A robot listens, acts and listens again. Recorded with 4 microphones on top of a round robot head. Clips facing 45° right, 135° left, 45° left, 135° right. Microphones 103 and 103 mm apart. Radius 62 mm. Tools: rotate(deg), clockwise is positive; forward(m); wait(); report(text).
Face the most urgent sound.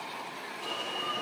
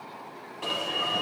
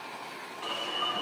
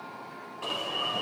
rotate(-165)
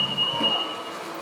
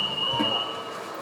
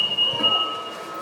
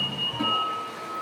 rotate(-45)
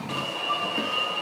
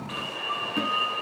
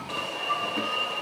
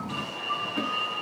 rotate(-15)
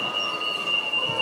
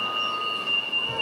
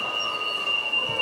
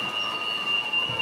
report("Facing the alarm.")